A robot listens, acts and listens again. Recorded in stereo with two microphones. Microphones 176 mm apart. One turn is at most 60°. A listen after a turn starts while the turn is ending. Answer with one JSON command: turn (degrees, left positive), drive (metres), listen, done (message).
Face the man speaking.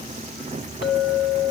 {"listen": true}
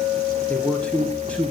{"turn": 30}
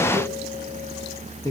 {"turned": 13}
{"turn": 60}
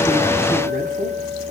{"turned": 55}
{"turn": 60}
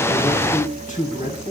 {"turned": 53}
{"turn": 50}
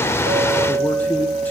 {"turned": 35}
{"turn": 15}
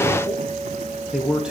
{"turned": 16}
{"done": "Found it: a man speaking, straight ahead."}